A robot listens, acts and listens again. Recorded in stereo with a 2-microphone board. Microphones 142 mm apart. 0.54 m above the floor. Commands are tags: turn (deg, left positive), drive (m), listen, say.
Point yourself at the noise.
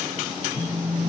<turn deg="90"/>
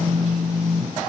<say>Found it: a phone buzzing, straight ahead.</say>